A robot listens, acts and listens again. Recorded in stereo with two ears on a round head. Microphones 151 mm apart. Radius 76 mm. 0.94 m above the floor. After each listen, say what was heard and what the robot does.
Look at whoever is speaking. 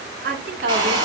The woman speaking: about 65° right or 115° right. Turn 65° right.
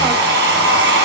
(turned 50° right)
Keep listening.
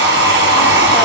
Keep listening.
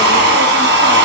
I heard a woman speaking, but can't make it out now. It was about 15° right or 65° right.